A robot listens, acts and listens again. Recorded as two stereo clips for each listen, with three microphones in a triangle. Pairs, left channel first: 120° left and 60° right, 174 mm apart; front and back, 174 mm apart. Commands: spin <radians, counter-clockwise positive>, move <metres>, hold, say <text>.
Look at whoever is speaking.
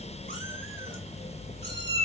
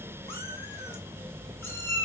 hold
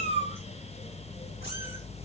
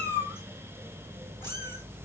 hold
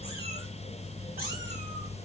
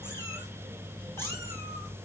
say I can't make out anyone speaking to turn to.